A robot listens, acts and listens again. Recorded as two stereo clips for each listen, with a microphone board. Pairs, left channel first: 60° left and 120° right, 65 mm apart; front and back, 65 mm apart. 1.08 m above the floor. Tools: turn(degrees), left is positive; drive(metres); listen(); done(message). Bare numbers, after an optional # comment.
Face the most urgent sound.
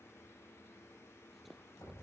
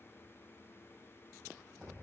listen()
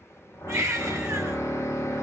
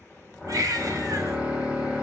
# The baby crying: 160° right.
turn(-160)
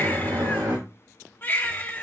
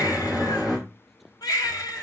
done("Facing the baby crying, 2 to 4 m away.")